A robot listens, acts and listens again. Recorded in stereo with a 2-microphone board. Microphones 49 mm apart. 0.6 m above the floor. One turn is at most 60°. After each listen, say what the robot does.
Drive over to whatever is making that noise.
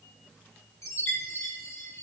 Turn 60° left.
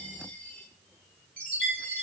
Turn 20° left.
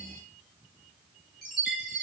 Drive 1.0 m forward.
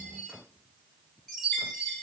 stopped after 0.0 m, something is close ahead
Something is in my way. I am facing the chime but have not reached it.